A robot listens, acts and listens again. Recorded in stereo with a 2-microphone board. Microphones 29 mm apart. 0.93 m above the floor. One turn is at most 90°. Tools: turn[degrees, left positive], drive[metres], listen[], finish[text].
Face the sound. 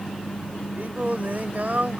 Thought: The singing: about 70° right or 110° right.
Action: turn[-70]
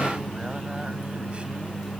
Action: listen[]
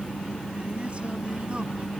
Action: listen[]
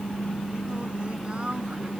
Action: finish[I heard singing, but can't make it out now. It was about straight ahead or 40° right.]